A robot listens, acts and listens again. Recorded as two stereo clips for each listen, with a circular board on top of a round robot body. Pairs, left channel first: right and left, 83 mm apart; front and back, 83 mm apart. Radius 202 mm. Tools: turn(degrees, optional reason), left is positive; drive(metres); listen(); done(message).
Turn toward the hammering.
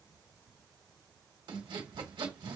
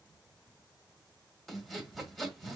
listen()
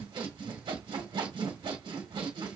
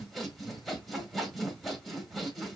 listen()
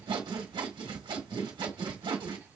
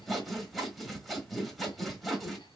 done("I can't make out hammering to turn to.")